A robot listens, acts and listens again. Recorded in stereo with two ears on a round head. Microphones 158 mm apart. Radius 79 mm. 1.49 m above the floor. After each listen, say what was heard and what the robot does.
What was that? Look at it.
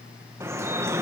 The dripping: about 15° right or 165° right. Turn 15° right.
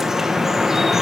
Found it: dripping, straight ahead.